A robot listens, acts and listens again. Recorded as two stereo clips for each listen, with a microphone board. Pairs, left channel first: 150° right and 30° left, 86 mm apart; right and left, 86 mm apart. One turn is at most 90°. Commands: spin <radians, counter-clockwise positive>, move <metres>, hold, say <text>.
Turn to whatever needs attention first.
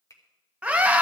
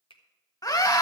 spin -0.79
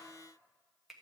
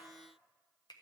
hold
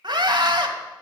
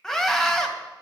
say Found it: a scream, straight ahead.